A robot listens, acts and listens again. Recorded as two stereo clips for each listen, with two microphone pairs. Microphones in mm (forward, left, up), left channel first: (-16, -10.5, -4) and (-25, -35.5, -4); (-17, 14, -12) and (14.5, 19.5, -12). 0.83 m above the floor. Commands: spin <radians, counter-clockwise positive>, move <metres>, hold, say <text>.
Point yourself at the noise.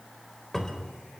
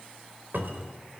say Found it: a cupboard door, straight ahead.